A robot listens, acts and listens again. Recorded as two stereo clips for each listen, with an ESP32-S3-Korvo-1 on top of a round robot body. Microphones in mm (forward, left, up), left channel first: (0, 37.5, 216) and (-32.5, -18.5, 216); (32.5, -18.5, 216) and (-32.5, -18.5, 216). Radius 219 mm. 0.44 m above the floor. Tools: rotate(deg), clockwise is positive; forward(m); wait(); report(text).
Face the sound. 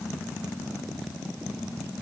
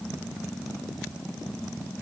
wait()
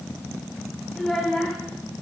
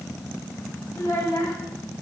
rotate(20)
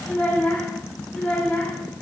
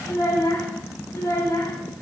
report("Found it: a child speaking, straight ahead, 2 to 4 m away.")